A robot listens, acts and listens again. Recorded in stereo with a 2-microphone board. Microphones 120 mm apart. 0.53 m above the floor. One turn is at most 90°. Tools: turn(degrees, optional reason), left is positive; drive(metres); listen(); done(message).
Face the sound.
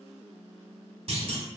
turn(degrees=-55, reason="The clunk: about 55° right or 125° right.")
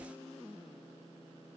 listen()
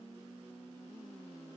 done("I heard a clunk, but can't make it out now. It was about straight ahead or 70° right.")